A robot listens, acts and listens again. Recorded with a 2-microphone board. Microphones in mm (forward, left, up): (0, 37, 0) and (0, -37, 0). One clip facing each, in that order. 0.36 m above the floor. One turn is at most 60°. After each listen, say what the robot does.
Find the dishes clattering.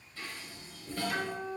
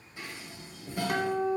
Turn 20° right.
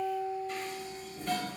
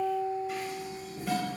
Facing the dishes clattering, under 1 m away.